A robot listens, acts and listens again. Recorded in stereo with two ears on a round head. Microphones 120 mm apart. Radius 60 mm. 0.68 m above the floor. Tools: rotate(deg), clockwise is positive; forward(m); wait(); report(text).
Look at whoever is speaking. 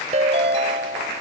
wait()
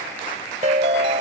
wait()
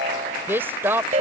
rotate(15)
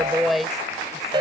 report("Found it: a woman speaking, straight ahead.")